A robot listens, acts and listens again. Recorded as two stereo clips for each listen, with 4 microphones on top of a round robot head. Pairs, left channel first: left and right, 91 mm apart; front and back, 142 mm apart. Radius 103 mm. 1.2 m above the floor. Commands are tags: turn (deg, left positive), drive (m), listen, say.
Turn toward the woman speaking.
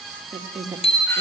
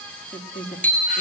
<turn deg="-45"/>
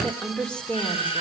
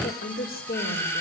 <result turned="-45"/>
<turn deg="10"/>
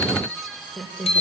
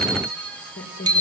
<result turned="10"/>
<turn deg="10"/>
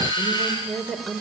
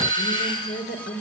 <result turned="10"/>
<say>Found it: a woman speaking, straight ahead, over 4 m away.</say>